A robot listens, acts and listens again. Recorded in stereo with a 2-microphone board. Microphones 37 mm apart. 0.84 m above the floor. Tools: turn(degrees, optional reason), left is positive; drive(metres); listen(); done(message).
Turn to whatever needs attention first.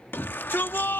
turn(degrees=75, reason="The shout: about 75° left or 105° left.")
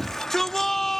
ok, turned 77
done("Found it: a shout, straight ahead.")